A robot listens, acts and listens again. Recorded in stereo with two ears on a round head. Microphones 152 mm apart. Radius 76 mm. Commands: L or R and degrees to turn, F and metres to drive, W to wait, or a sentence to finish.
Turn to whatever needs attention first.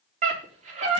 R45
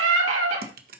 R90
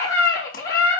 L20
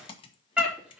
Facing the scream.